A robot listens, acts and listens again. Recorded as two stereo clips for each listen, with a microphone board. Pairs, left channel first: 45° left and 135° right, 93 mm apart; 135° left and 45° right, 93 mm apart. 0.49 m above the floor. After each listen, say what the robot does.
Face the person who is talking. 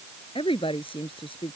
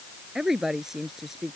Turn 40° left.
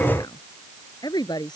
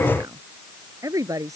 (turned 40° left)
Facing the woman speaking.